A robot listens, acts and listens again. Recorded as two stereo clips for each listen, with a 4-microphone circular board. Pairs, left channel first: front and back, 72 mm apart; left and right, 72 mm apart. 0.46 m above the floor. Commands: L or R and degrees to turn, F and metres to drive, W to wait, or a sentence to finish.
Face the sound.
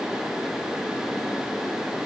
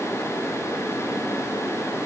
W
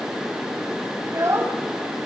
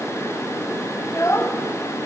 L135
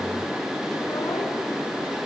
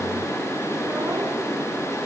W
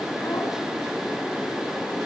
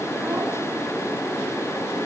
W
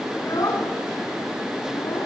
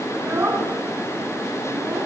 R35
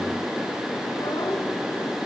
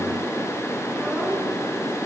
W
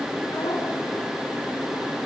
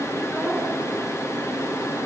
W
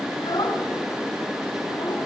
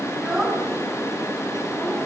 Found it: a child speaking, straight ahead, over 4 m away.